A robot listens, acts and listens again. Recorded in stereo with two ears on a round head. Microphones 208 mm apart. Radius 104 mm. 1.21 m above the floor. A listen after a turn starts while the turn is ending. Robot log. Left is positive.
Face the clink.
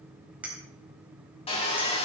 cmd yaw -30
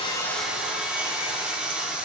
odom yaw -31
cmd idle
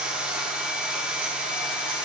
cmd idle
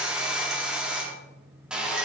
end: I heard a clink, but can't make it out now. It was about 25° left or 140° right.